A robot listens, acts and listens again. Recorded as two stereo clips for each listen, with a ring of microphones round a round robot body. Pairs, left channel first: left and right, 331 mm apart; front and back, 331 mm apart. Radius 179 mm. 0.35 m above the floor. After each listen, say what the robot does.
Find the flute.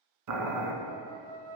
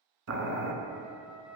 Turn 95° right.
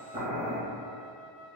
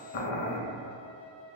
Turn 25° left.
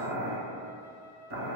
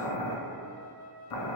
Facing the flute, 1 to 2 m away.